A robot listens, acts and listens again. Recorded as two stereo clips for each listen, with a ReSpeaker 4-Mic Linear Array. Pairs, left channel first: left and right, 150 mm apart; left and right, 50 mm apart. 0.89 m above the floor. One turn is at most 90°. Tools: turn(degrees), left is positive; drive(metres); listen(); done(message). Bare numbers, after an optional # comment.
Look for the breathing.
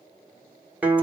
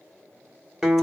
listen()
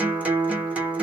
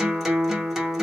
listen()
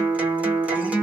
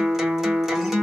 done("I can't make out breathing, only a guitar.")